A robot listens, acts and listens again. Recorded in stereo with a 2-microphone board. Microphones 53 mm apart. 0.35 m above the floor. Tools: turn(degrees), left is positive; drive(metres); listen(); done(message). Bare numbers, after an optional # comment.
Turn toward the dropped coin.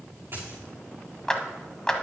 # The dropped coin: about 50° right or 130° right.
turn(-50)
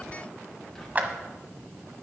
listen()
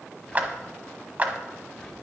done("I heard a dropped coin, but can't make it out now. It was about straight ahead or 80° right.")